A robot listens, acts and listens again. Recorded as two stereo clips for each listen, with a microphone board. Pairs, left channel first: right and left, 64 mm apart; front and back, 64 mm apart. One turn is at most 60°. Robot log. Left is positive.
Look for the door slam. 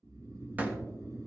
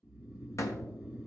note: The door slam: 30° left.
cmd yaw +30
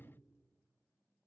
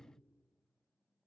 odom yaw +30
end: I heard a door slam from this way, but can't make it out now.